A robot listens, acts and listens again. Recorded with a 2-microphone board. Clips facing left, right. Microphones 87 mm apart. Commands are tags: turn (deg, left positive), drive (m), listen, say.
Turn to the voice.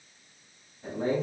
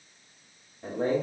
<turn deg="-50"/>
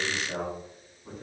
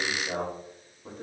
<turn deg="-70"/>
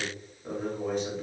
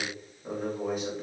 <say>Found it: a man speaking, straight ahead, 2 to 4 m away.</say>